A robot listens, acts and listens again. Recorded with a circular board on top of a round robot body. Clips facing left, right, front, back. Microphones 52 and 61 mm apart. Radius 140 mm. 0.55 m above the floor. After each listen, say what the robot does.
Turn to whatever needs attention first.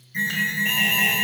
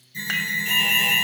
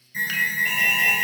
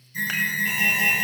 Turn 45° left.
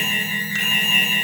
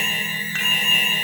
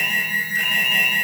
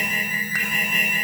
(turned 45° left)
Facing the alarm.